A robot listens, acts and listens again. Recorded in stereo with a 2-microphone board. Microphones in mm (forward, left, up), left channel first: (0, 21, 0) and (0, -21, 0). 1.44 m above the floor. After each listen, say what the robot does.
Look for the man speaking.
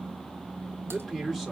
Turn 30° left.
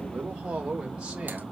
Turn 25° right.
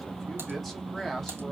Found it: a man speaking, straight ahead.